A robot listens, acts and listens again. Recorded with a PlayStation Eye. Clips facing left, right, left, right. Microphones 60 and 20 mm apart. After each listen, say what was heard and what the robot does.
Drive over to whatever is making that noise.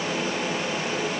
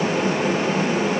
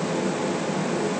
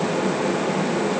Keep listening.
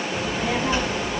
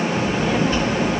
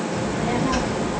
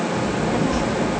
The child speaking: about 15° left or 165° left. Turn 15° left.
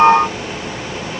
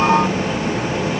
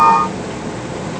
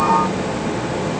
So it is at 150° left. Turn 150° left.
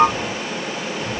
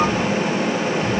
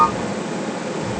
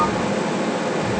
The child speaking is now 30° left. Turn 30° left.
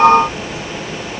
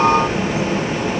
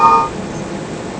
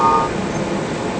Drive 1.0 m forward.
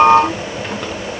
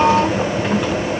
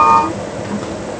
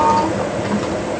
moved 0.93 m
Drive 1.0 m forward.
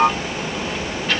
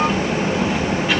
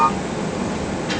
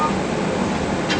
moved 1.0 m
The child speaking is now 10° right. Turn 10° right.
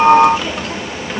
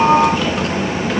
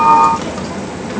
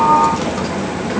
Drive 1.0 m forward.
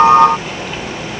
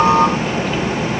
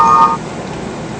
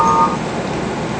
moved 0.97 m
Drive 1.0 m forward.
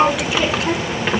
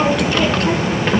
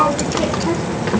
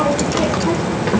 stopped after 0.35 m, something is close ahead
I am next to the child speaking.